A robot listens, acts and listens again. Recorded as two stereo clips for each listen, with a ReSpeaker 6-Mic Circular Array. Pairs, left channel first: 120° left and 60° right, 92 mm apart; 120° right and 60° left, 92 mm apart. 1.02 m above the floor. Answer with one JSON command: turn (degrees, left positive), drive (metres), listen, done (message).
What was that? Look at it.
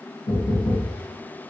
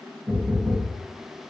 {"turn": 130}
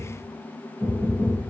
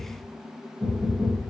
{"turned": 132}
{"done": "Facing the knocking."}